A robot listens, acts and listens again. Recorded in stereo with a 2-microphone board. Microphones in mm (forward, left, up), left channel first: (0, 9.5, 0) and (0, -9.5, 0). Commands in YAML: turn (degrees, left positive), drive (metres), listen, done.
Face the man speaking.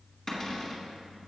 listen: true
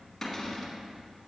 listen: true
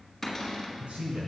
turn: -70
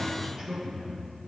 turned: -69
turn: -30
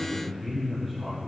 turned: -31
done: "Found it: a man speaking, straight ahead, over 4 m away."